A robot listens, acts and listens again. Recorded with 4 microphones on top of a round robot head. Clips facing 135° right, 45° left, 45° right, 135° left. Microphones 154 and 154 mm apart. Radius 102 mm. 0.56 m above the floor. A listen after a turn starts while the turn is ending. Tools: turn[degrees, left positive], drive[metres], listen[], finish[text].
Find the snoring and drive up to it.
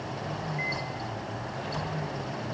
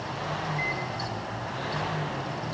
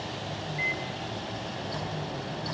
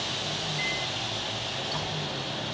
Action: listen[]
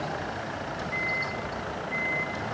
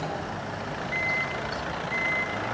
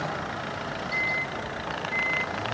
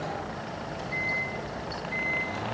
Action: listen[]
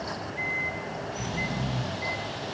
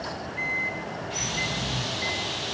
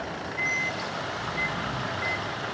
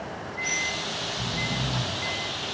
Thought: The snoring: 170° left.
Action: turn[170]
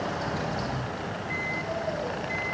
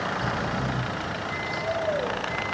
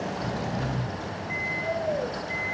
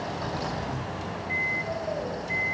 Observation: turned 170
Action: drive[1.0]
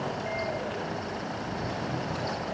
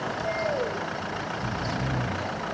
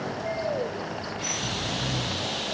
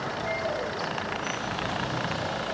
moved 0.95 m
Thought: The snoring is now 10° left.
Action: turn[10]
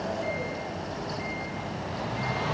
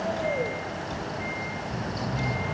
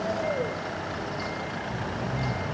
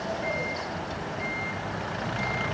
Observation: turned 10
Action: drive[1.0]
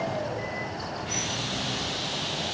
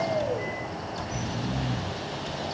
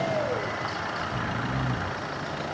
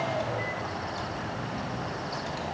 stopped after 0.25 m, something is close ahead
Action: finish[Arrived at the snoring, straight ahead.]